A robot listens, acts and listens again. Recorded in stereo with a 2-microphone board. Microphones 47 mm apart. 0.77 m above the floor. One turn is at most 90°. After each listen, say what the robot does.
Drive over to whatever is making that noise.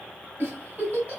Turn 40° right.
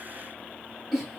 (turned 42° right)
Drive 1.0 m forward.
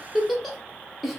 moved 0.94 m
Drive 1.0 m forward.
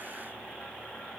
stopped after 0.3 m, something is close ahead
Keep listening.
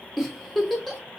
I am next to the giggle.